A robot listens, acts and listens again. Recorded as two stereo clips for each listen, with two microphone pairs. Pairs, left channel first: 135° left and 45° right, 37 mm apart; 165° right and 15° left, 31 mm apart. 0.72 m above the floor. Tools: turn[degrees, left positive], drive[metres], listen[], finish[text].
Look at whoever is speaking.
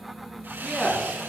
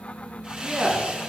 Thought: The man speaking: 70° left.
Action: turn[70]
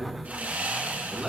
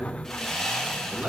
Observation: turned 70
Thought: The man speaking is now 25° left.
Action: turn[25]
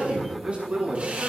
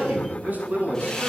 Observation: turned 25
Thought: The man speaking is now 10° left.
Action: turn[10]
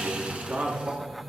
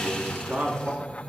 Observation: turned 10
Action: finish[Found it: a man speaking, straight ahead, over 4 m away.]